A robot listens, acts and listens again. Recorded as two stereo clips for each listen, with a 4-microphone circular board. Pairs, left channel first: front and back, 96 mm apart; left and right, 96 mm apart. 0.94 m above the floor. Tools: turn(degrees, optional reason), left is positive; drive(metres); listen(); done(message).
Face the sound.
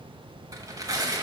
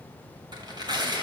turn(degrees=-130, reason="The tearing paper: 130° right.")
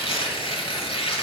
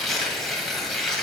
done("Facing the tearing paper.")